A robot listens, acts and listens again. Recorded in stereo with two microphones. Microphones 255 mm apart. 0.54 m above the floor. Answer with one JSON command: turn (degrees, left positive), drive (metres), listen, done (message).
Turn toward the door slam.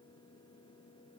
{"listen": true}
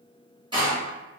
{"turn": -20}
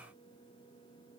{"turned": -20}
{"listen": true}
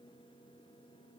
{"done": "I heard a door slam, but can't make it out now. It was about straight ahead or 140° right."}